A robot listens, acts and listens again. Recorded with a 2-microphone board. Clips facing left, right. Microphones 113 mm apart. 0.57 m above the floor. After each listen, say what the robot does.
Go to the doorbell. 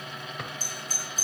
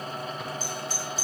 Turn 45° left.
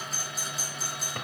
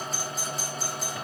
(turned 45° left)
Drive 1.0 m forward.
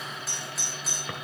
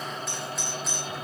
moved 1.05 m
Drive 1.0 m forward.
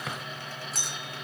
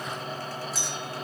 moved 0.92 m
Drive 1.0 m forward.
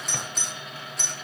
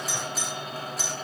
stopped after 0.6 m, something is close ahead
I am next to the doorbell.